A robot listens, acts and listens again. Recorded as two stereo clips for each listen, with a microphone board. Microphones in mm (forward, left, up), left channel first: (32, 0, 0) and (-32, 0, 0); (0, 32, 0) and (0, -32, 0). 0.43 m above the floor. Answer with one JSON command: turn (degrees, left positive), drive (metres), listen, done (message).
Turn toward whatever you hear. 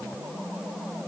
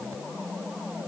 {"listen": true}
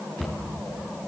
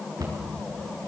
{"turn": -85}
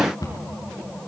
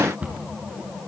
{"turn": -20}
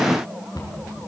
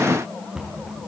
{"turn": -10}
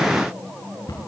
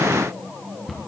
{"done": "Facing the cupboard door."}